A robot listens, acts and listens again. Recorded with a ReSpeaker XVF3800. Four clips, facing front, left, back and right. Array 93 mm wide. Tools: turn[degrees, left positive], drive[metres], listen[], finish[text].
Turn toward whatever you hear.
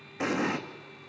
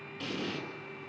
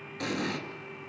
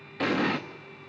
Thought: The explosion: 65° right.
Action: turn[-65]
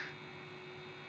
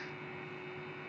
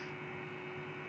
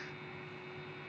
Action: finish[I heard an explosion from this way, but can't make it out now.]